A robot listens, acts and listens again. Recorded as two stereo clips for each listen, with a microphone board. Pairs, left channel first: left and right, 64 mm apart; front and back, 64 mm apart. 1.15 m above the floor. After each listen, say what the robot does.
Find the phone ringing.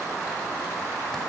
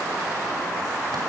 Keep listening.
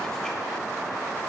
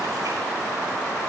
Keep listening.
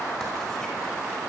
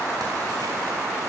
I can't make out a phone ringing to turn to.